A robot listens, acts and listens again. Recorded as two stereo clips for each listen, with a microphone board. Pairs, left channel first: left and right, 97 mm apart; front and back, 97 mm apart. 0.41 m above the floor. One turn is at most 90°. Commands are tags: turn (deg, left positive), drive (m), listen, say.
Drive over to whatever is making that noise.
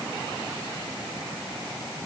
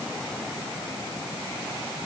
<listen/>
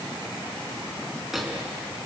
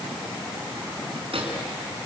<turn deg="-90"/>
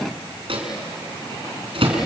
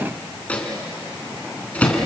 <turn deg="-75"/>
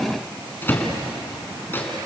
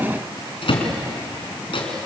<turn deg="20"/>
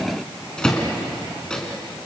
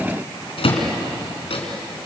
<turn deg="10"/>
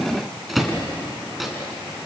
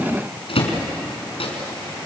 <drive m="1.0"/>
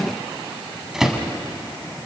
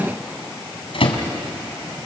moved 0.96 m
<drive m="1.0"/>
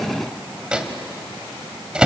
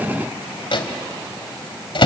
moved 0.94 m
<turn deg="-10"/>
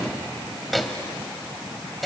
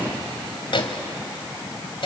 <drive m="1.0"/>
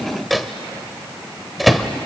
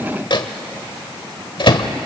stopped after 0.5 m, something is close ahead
<say>Arrived at the microwave, straight ahead.</say>